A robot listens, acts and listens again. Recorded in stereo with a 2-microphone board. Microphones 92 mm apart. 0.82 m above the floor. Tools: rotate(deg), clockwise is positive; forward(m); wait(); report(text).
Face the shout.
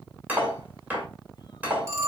wait()
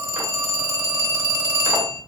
wait()
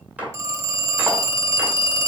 report("I can't make out a shout, only cutlery clinking and a phone ringing.")